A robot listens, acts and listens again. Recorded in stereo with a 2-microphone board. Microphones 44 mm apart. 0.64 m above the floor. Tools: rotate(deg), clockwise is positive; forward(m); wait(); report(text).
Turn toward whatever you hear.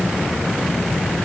wait()
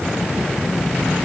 wait()
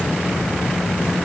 report("I can't make out anything.")